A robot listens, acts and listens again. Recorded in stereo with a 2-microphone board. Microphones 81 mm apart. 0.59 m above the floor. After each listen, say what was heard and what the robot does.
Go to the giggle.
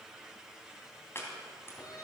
Keep listening.
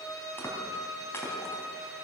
Keep listening.
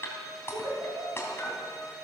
The giggle: about 60° right or 120° right. Turn 60° right.
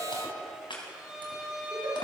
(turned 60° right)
Keep listening.
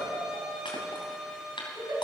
So it is at 60° right. Turn 60° right.
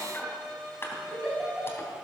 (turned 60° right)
Drive 1.0 m forward.
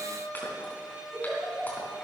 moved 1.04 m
Drive 1.0 m forward.
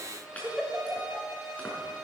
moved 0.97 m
Drive 1.0 m forward.
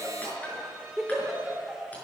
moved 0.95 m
Drive 1.0 m forward.
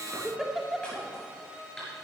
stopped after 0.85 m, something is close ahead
I am next to the giggle.